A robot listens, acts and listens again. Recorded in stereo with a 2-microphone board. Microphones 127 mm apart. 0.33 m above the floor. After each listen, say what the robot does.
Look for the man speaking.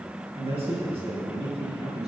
Turn 55° right.
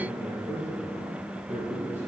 Turn 60° right.
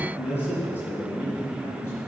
Turn 20° left.
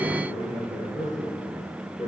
Found it: a man speaking, straight ahead.